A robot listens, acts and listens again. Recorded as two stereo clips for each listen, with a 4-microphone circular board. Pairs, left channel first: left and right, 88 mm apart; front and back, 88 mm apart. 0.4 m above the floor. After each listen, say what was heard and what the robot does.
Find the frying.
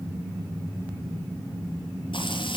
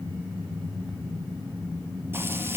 The frying: 115° left. Turn 115° left.
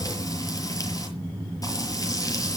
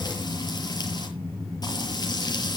The frying is now 40° left. Turn 40° left.
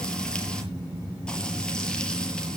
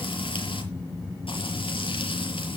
The frying is now 10° left. Turn 10° left.
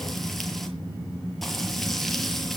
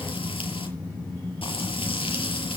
Facing the frying.